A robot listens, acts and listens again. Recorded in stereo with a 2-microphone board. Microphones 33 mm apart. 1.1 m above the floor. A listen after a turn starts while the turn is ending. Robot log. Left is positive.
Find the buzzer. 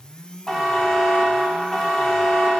cmd yaw +30
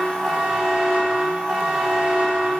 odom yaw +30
note: So it is at 25° right.
cmd yaw -25
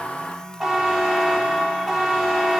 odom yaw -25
note: The buzzer is now 10° right.
cmd yaw -10
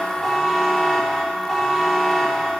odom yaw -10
end: Facing the buzzer.